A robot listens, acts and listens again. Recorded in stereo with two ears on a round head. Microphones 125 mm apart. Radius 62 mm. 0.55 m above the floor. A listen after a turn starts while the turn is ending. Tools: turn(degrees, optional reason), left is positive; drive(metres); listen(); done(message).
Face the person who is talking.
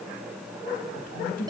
turn(degrees=75, reason="The woman speaking: about 75° left or 105° left.")
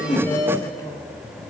listen()
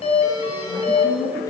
turn(degrees=25, reason="So it is at 25° left.")
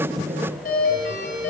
listen()
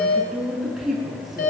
done("Found it: a woman speaking, straight ahead.")